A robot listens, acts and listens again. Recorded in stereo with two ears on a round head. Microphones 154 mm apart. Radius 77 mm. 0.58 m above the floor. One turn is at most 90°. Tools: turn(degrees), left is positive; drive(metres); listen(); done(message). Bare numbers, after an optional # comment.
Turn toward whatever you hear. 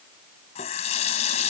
# The running tap: about 40° left or 140° left.
turn(40)
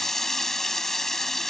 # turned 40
done("Found it: a running tap, straight ahead.")